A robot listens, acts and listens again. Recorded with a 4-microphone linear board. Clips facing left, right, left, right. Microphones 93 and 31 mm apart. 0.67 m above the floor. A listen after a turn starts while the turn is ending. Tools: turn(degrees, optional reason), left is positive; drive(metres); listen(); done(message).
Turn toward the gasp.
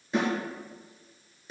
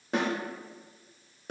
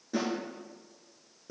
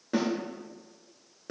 listen()
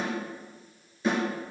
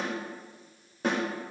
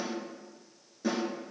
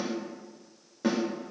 listen()
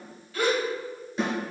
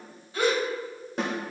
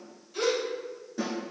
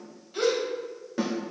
turn(degrees=-25, reason="The gasp: about 25° right or 155° right.")
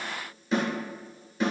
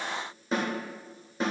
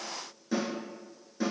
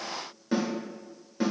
listen()
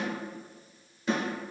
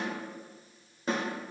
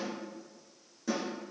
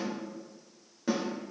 done("I heard a gasp, but can't make it out now. It was about straight ahead or 130° right.")